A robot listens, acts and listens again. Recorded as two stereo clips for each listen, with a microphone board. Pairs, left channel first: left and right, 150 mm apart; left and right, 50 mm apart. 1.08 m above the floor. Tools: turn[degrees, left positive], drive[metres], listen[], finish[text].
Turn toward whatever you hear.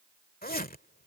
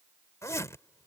Thought: The zipper: about 75° left or 105° left.
Action: turn[75]
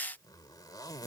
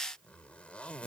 Thought: So it is at 25° left.
Action: turn[25]
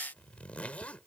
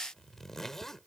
Thought: The zipper is now 10° left.
Action: turn[10]
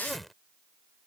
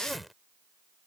Action: finish[Facing the zipper.]